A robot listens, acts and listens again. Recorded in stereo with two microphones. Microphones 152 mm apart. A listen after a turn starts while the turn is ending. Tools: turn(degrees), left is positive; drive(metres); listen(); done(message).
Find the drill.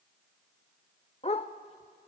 listen()
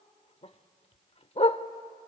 listen()
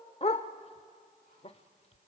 done("I can't make out a drill to turn to.")